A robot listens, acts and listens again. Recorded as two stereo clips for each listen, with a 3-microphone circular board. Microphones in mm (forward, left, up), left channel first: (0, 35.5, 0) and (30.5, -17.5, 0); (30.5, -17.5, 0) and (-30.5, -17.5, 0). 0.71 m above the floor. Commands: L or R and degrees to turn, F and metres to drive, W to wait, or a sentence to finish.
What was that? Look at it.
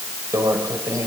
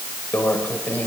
R60
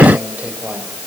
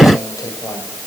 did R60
W
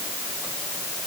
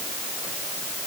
W
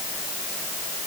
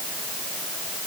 I heard a microwave from this way, but can't make it out now.